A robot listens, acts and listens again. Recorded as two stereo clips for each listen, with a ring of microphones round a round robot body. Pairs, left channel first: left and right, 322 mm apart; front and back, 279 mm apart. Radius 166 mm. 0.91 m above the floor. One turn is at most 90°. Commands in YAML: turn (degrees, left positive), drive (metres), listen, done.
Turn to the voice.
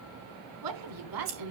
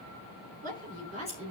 turn: -90
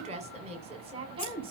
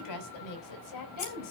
turn: -15
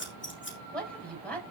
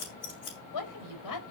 done: "Found it: a woman speaking, straight ahead, over 4 m away."